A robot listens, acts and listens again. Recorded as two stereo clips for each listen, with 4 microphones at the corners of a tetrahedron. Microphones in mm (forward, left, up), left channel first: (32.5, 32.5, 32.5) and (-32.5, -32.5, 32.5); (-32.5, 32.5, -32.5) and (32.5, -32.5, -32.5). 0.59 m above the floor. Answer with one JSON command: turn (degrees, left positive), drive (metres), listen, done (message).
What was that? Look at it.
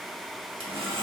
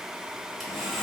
{"turn": -130}
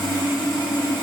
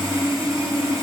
{"turn": 10}
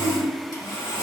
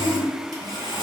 {"done": "Found it: sawing, straight ahead."}